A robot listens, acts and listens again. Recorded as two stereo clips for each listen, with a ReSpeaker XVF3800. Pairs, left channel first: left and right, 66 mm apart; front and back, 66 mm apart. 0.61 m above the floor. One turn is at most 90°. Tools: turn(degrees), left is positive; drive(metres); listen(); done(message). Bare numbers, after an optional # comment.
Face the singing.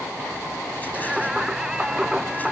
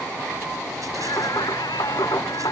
# The singing: 10° right.
turn(-10)
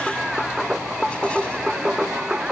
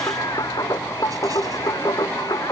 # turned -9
# The singing is now 10° right.
turn(-10)
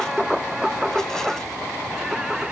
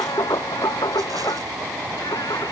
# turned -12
# The singing is now 10° right.
turn(-10)
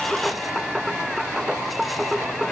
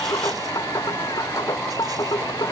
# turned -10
done("Facing the singing.")